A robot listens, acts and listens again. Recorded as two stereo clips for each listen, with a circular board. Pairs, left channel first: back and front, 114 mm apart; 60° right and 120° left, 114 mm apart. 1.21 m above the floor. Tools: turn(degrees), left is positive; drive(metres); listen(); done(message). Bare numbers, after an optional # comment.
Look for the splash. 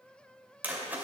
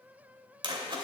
# The splash: 75° left.
turn(75)
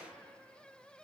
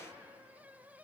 done("Facing where the splash came from. I can't hear it now.")